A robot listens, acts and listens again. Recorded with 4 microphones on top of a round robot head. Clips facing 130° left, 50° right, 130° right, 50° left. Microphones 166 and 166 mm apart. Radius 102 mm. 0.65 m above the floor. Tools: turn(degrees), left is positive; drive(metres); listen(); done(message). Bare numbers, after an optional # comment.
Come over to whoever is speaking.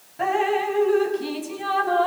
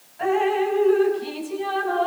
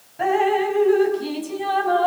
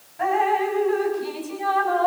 listen()
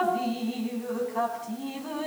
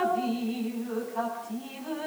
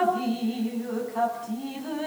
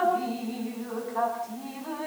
listen()
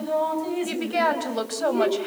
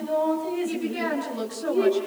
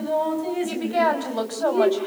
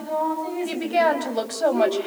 # The woman speaking: 120° left.
turn(120)
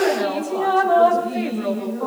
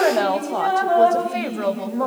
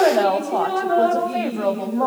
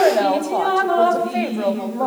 # The woman speaking is now 30° right.
turn(-30)
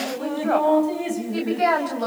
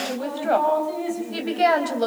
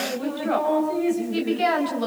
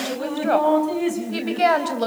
# The woman speaking is now 10° left.
turn(10)
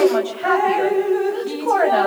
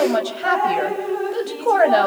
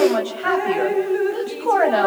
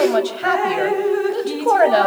drive(1.0)
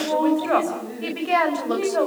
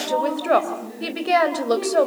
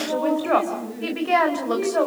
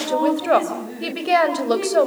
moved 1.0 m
drive(1.0)
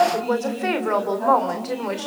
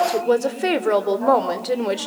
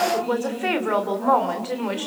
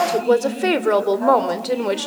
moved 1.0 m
drive(1.0)
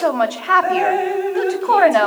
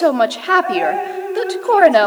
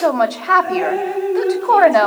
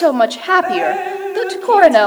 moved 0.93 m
drive(1.0)
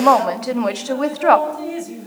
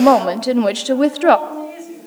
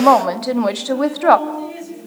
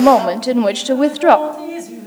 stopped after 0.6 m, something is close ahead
done("Arrived at the woman speaking, straight ahead.")